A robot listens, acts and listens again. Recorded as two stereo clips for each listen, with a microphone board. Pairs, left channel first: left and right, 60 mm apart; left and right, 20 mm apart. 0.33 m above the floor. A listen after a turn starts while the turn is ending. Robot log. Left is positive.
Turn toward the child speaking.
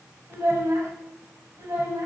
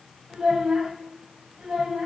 note: The child speaking: about 60° right or 120° right.
cmd yaw -60
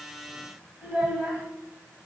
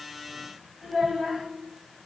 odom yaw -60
note: So it is at 15° right.
cmd yaw -15
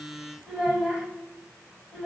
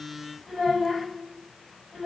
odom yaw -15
end: Facing the child speaking, 1 to 2 m away.